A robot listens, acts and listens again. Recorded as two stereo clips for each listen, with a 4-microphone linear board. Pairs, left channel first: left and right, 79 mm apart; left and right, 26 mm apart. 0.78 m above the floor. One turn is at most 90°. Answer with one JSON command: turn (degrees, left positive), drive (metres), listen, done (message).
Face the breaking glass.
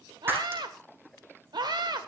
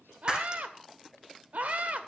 {"turn": -30}
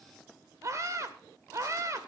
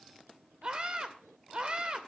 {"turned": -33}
{"listen": true}
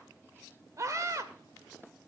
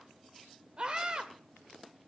{"done": "I heard breaking glass, but can't make it out now. It was about 5° left or 120° right."}